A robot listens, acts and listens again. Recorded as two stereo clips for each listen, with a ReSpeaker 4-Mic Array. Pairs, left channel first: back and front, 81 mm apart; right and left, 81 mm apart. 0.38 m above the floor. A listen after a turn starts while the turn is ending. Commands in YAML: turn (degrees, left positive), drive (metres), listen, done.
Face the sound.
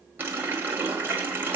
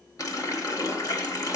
turn: -60
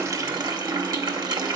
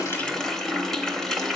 done: "Found it: a running tap, straight ahead, 1 to 2 m away."